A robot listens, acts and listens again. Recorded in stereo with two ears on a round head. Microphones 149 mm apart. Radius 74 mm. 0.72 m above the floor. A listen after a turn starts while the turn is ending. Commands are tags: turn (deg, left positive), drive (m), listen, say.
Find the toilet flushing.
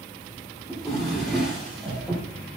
<listen/>
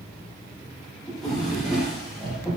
<listen/>
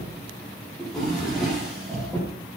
<say>I can't make out a toilet flushing, only a drawer.</say>